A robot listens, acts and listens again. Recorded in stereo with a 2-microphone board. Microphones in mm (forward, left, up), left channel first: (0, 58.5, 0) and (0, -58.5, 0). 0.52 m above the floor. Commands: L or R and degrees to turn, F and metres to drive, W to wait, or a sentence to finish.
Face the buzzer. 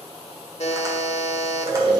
L65
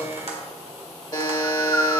L40
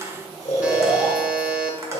R10
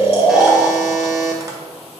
Facing the buzzer, under 1 m away.